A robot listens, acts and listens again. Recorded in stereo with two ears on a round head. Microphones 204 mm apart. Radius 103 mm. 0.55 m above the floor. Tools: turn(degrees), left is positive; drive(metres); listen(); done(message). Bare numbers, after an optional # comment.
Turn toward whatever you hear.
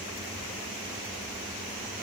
listen()
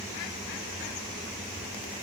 listen()
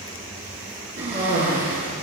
# The cough: about 40° right or 140° right.
turn(-40)
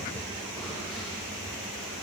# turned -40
listen()
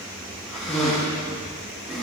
done("Facing the cough.")